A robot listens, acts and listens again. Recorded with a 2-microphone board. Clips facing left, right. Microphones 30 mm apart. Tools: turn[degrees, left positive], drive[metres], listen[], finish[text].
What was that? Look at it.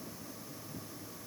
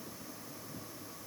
Action: listen[]
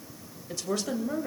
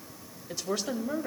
Action: turn[-30]
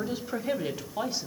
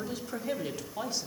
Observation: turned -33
Thought: So it is at 20° left.
Action: turn[20]
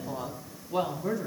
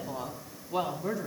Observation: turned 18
Action: finish[Facing the woman speaking.]